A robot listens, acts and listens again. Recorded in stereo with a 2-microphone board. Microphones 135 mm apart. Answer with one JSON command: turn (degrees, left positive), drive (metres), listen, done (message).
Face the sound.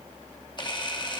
{"turn": 35}
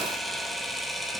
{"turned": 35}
{"done": "Facing the camera shutter."}